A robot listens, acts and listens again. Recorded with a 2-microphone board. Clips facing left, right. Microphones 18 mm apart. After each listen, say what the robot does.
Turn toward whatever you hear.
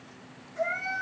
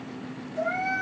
Turn 20° right.
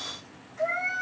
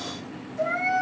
Turn 140° right.
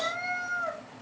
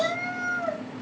Turn 35° left.
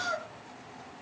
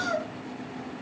Turn 15° right.
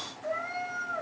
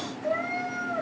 Found it: a cat meowing, straight ahead, 1 to 2 m away.